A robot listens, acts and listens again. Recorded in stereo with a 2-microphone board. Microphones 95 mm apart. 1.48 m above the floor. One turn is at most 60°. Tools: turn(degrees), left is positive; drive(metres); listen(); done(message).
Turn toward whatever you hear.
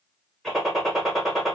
turn(degrees=30)
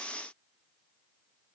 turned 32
listen()
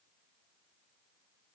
done("I heard a gunshot, but can't make it out now. It was about 30° right or 150° left.")